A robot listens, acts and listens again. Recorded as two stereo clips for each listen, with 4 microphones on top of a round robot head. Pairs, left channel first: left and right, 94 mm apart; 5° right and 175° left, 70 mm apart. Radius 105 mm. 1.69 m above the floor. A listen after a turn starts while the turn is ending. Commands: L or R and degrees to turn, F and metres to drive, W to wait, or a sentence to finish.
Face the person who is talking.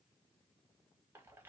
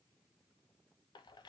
W
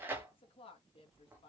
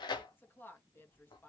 L55
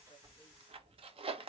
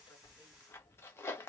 W
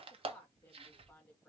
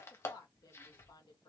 L10
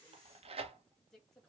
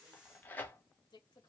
Facing the woman speaking, 1 to 2 m away.